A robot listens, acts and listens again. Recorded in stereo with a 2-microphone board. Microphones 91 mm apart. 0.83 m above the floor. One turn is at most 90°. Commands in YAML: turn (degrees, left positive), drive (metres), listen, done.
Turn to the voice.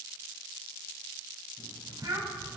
turn: -50
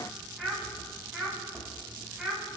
done: "Found it: a child speaking, straight ahead."